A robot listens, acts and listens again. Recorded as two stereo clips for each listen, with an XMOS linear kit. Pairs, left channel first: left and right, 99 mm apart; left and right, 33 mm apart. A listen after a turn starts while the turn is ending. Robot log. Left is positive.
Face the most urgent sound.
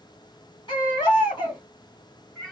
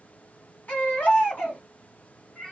note: The baby crying: about 50° left or 130° left.
cmd yaw +50
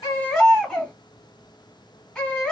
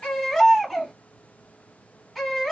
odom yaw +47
end: Facing the baby crying.